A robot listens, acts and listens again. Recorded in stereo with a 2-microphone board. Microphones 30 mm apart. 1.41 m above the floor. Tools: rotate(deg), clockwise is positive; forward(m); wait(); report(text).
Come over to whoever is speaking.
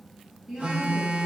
rotate(35)
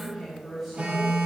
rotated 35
forward(1.0)
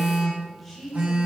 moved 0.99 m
forward(1.0)
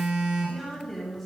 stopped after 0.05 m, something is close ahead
report("Arrived at the woman speaking, straight ahead.")